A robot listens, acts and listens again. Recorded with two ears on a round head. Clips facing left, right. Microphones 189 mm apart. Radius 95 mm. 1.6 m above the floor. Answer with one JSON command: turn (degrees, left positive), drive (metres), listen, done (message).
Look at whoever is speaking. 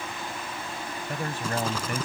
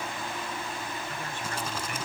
{"turn": 35}
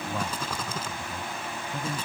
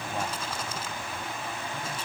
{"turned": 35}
{"turn": 110}
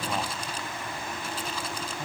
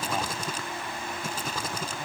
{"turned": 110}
{"listen": true}
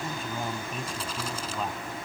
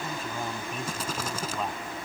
{"done": "Found it: a man speaking, straight ahead."}